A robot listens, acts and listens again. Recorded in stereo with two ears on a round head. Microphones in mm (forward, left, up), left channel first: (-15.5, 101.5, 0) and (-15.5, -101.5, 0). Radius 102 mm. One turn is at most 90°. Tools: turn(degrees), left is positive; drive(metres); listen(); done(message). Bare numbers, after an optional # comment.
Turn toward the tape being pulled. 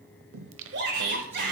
listen()
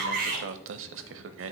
listen()
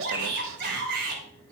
done("I can't make out tape being pulled to turn to.")